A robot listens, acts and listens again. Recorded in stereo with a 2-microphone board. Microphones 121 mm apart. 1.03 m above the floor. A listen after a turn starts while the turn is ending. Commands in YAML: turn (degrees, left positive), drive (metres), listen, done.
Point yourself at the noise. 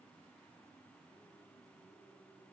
listen: true
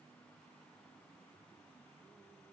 listen: true
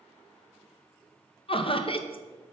turn: 45
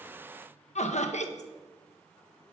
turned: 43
turn: 85
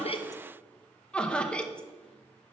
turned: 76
turn: 10
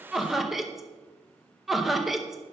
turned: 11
done: "Found it: laughter, straight ahead."